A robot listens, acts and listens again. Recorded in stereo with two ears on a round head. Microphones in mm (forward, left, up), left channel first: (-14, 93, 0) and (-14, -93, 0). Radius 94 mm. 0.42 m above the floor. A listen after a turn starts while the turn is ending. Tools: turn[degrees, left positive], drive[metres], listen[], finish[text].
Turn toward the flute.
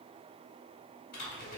Action: listen[]
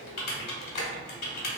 Action: listen[]
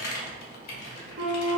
Thought: The flute: about 55° right or 125° right.
Action: turn[-55]
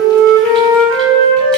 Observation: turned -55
Thought: So it is at 70° right.
Action: turn[-70]
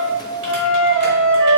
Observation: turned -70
Action: finish[Found it: a flute, straight ahead, under 1 m away.]